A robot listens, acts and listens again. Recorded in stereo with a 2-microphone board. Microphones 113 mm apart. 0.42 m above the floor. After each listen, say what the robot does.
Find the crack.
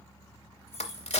Turn 70° left.
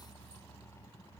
Keep listening.
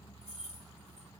I heard a crack, but can't make it out now. It was about straight ahead or 40° left.